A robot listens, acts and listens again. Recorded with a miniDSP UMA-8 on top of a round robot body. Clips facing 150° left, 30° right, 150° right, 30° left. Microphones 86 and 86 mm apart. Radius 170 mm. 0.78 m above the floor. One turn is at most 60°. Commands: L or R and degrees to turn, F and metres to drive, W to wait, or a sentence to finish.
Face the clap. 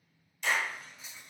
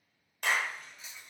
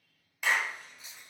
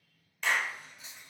R60
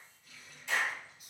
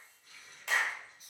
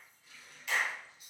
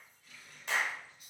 R25
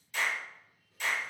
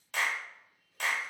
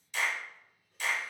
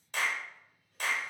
R10
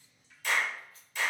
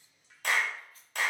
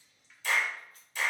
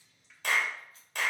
Facing the clap, 1 to 2 m away.